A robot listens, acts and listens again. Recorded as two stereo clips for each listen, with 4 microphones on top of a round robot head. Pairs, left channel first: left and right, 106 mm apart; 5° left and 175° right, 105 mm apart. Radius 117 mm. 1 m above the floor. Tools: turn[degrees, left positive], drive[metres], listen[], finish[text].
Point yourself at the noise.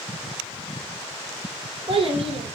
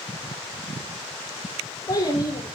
Thought: The child speaking: 60° right.
Action: turn[-60]
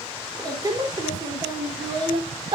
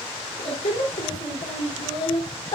Thought: The child speaking is now 50° right.
Action: turn[-50]
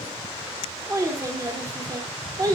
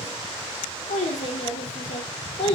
Thought: The child speaking is now 35° right.
Action: turn[-35]
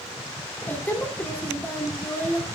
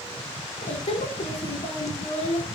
Thought: The child speaking is now 15° left.
Action: turn[15]
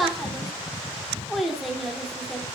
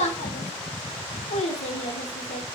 Action: finish[Found it: a child speaking, straight ahead.]